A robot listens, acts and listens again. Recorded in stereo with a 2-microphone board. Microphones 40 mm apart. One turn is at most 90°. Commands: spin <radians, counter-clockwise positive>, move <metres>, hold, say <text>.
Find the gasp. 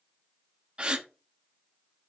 spin -0.44
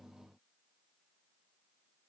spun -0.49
hold
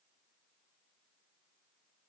say I heard a gasp, but can't make it out now. It was about 5° left or 130° right.